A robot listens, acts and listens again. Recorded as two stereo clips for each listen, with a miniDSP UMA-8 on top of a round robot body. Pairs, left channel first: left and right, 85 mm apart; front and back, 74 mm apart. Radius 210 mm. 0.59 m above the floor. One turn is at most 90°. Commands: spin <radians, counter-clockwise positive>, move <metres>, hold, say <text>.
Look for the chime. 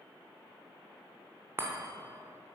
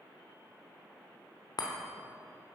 spin -0.44
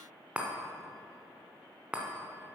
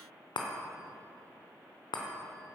spin -0.26
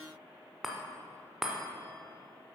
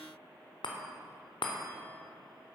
say Facing the chime.